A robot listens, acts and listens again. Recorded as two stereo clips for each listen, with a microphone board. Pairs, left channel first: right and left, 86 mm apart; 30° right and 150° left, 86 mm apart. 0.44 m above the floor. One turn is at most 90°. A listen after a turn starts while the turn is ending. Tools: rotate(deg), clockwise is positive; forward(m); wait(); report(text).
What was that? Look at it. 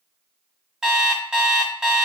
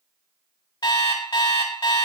report("Facing the alarm clock.")